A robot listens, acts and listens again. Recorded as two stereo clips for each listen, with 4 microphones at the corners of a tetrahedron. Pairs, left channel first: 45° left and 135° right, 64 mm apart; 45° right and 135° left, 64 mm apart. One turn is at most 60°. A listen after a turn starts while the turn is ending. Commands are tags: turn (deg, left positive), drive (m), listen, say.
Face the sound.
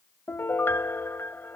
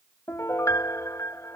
<turn deg="-10"/>
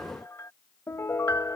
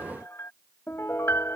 <say>Facing the piano.</say>